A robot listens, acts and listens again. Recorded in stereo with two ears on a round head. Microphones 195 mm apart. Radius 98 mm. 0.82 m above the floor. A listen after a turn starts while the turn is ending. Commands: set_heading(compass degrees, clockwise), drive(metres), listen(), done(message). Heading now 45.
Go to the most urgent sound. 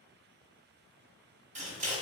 listen()
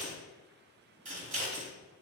listen()
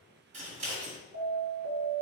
set_heading(105)
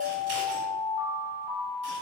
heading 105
set_heading(135)
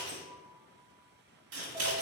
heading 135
listen()
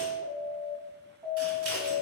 set_heading(150)
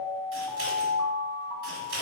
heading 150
drive(1.0)
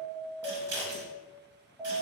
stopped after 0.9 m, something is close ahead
done("Arrived at the alarm, straight ahead.")